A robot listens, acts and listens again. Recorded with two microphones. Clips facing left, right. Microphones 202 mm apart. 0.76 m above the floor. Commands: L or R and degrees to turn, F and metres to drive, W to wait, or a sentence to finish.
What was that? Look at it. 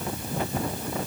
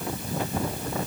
W
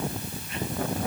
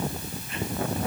W
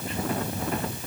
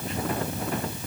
I can't make out anything.